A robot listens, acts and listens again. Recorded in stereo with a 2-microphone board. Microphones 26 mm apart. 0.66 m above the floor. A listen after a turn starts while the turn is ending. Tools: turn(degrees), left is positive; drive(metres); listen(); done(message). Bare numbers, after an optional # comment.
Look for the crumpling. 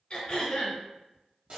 listen()
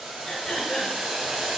listen()
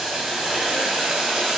done("I can't make out crumpling, only throat clearing and boiling.")